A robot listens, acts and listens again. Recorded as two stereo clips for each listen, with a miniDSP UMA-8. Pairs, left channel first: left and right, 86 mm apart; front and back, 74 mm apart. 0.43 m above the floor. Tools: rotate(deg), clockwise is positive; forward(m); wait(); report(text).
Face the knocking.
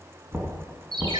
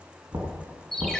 rotate(160)
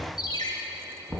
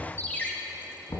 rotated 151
rotate(10)
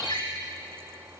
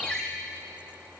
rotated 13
wait()
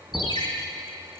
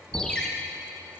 wait()
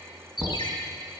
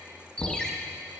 report("Found it: knocking, straight ahead, 2 to 4 m away.")